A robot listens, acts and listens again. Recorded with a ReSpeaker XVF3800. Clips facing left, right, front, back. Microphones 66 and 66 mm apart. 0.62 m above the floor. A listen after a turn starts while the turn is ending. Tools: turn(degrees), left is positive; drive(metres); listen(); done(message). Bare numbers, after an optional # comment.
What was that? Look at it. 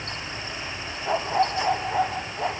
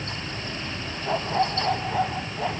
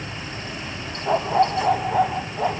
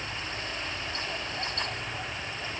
# The dog barking: 10° left.
turn(10)
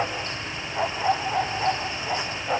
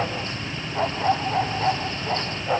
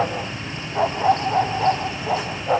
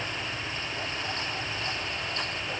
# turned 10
done("Found it: a dog barking, straight ahead.")